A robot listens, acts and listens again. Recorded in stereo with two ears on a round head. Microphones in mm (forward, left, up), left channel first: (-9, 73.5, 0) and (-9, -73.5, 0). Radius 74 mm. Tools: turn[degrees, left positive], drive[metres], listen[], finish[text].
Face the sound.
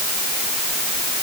Action: listen[]
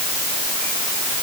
Action: listen[]
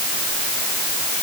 Action: finish[I can't make out anything.]